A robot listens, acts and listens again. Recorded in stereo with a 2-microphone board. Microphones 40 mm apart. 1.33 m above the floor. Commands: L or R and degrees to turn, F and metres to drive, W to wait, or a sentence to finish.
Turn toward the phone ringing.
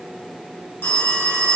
L65
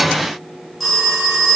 Facing the phone ringing.